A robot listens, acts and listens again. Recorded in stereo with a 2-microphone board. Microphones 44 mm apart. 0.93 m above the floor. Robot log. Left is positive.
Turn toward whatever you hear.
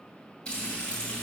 note: The frying: about 25° left or 155° left.
cmd yaw +25
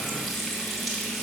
end: Facing the frying, 2 to 4 m away.